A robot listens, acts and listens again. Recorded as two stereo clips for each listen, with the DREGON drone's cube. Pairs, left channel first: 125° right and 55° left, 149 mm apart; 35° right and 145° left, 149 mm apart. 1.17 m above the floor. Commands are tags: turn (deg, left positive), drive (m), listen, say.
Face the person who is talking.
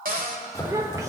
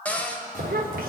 <turn deg="125"/>
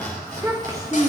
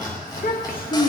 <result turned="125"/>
<turn deg="-15"/>
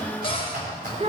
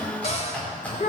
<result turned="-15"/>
<say>Found it: a child speaking, straight ahead.</say>